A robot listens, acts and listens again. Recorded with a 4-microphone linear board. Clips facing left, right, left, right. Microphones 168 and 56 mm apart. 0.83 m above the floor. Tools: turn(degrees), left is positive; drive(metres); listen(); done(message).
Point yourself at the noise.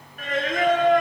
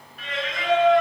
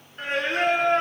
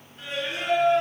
turn(degrees=50)
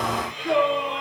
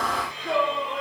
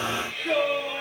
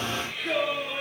done("Facing the singing.")